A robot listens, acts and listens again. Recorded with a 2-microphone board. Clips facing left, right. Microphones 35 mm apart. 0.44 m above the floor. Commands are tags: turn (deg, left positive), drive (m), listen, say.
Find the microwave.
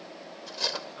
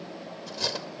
<listen/>
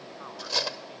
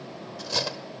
<listen/>
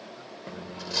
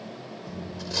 <turn deg="55"/>
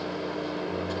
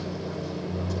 <turn deg="55"/>
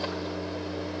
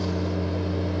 <say>Facing the microwave, under 1 m away.</say>